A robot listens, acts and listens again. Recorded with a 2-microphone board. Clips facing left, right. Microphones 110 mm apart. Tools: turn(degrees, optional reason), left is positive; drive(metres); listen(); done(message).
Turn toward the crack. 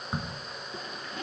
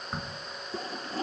turn(degrees=30)
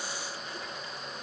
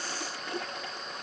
listen()
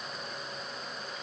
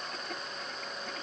done("I heard a crack, but can't make it out now. It was about 25° right or 145° left.")